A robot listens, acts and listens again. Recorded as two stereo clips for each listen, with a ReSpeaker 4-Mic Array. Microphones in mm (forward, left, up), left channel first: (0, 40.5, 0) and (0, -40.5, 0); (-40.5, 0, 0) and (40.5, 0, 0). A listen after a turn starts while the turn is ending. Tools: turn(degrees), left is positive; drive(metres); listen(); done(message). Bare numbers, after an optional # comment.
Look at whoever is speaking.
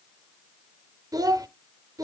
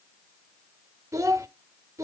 # The child speaking: 50° right.
turn(-50)
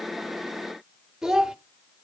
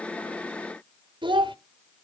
done("Found it: a child speaking, straight ahead.")